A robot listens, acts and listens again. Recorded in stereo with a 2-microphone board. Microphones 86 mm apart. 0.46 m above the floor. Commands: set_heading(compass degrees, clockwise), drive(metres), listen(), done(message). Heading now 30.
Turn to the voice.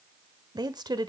set_heading(85)
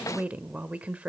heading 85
set_heading(105)
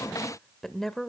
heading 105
done("Facing the woman speaking.")